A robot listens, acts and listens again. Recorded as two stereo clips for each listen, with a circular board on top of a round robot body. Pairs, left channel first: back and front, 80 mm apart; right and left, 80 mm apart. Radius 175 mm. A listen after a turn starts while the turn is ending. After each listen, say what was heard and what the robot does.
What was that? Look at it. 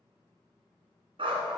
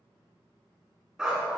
The dog barking: 10° left. Turn 10° left.
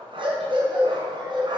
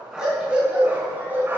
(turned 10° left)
The dog barking is now 25° left. Turn 25° left.
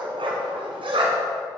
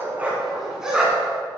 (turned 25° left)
The dog barking is now 10° left. Turn 10° left.
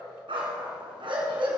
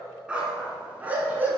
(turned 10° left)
The dog barking is now 20° left. Turn 20° left.
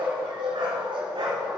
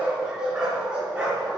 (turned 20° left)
The dog barking is now 10° left. Turn 10° left.
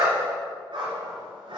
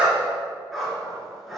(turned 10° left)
Found it: a dog barking, straight ahead, 2 to 4 m away.